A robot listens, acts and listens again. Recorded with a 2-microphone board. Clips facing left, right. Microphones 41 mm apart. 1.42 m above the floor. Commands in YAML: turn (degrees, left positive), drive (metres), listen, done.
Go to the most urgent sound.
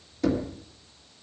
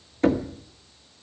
listen: true
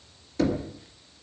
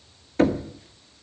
listen: true
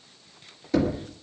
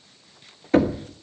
done: "I can't make out anything urgent, only knocking."